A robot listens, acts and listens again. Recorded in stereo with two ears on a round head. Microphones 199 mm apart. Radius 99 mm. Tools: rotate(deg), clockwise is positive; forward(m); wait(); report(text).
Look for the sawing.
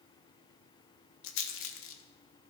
wait()
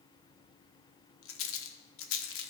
wait()
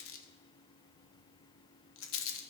report("I can't make out sawing to turn to.")